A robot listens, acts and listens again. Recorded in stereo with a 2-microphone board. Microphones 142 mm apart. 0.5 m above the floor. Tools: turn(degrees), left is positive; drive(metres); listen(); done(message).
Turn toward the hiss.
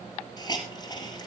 turn(degrees=30)
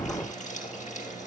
turn(degrees=125)
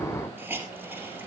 turn(degrees=-15)
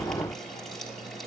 listen()
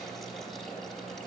listen()
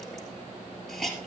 done("Found it: a hiss, straight ahead.")